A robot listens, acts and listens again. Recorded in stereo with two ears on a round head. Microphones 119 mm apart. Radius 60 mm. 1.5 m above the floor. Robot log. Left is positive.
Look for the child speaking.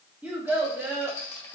note: The child speaking: about 25° right or 155° right.
cmd yaw -25
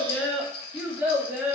cmd yaw -30
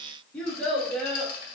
end: Facing the child speaking, 2 to 4 m away.